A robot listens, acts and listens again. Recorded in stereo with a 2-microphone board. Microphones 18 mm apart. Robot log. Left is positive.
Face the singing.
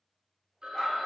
cmd idle
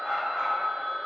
cmd idle
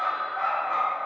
end: I can't make out singing to turn to.